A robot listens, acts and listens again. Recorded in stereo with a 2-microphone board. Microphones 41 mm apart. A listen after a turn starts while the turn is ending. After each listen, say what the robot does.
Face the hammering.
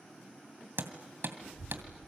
Turn 70° right.
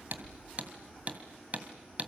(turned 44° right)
Turn 40° right.
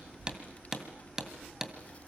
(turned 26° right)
Turn 15° right.
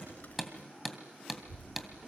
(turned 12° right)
Facing the hammering, 2 to 4 m away.